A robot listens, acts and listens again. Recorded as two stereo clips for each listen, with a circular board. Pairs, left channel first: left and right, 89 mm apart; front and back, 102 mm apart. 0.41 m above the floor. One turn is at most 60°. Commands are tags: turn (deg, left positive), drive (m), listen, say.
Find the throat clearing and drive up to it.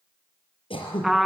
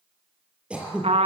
<turn deg="60"/>
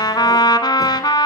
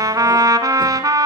<turn deg="40"/>
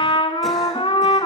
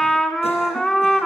<listen/>
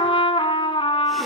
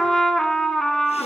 <say>Facing where the throat clearing came from. I can't hear it now. I did not reach it.</say>